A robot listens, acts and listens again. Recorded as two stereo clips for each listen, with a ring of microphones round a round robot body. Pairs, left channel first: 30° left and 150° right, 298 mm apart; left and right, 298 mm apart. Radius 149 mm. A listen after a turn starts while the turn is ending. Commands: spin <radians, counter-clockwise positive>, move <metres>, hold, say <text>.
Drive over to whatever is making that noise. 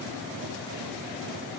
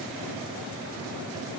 hold
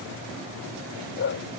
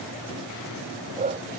spin -0.35
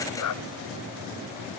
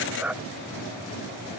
move 1.0
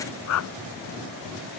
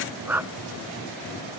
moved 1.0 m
move 1.0
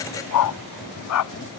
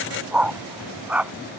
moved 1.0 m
move 1.0
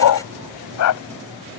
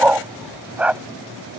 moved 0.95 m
move 1.0
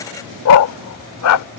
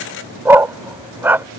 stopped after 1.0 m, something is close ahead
say I am next to the dog barking.